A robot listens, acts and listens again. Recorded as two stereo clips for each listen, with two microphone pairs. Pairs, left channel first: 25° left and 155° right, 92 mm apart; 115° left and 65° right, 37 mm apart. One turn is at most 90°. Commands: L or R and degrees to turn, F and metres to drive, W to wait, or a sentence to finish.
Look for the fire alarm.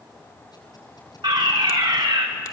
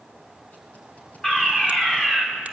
R90
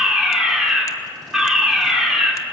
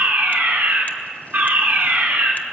R70
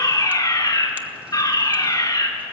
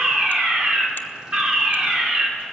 R10
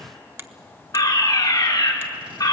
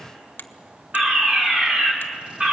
Found it: a fire alarm, straight ahead, 2 to 4 m away.